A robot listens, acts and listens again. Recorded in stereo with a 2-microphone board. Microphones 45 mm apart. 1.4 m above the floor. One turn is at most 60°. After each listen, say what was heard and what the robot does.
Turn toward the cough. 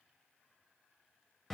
Keep listening.
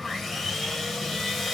Keep listening.
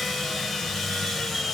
I can't make out a cough to turn to.